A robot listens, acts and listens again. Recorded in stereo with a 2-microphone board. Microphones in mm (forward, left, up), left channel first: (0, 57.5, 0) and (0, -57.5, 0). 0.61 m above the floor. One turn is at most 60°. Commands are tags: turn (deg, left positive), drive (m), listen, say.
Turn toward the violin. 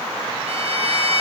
<turn deg="-60"/>
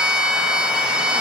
<turn deg="-10"/>
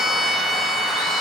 <say>Found it: a violin, straight ahead, 1 to 2 m away.</say>